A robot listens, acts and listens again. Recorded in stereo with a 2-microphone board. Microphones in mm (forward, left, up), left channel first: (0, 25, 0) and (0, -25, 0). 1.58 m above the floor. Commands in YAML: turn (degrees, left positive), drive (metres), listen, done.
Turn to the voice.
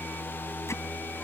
listen: true
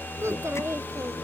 turn: -90
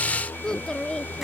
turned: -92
turn: 15
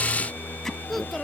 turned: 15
done: "Facing the child speaking."